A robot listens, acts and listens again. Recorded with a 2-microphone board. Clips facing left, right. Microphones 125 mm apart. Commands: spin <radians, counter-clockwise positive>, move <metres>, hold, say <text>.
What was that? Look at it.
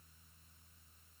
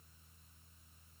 hold
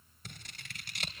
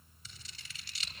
spin 1.05
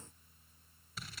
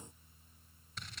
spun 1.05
say Found it: scissors, straight ahead, 2 to 4 m away.